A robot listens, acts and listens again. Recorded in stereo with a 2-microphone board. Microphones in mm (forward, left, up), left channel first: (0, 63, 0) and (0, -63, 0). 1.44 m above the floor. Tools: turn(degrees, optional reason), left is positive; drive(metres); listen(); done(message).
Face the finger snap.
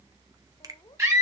turn(degrees=-30, reason="The finger snap: about 30° right or 150° right.")
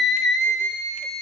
listen()
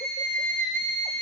listen()
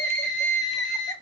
done("I heard a finger snap, but can't make it out now. It was about straight ahead or 120° right.")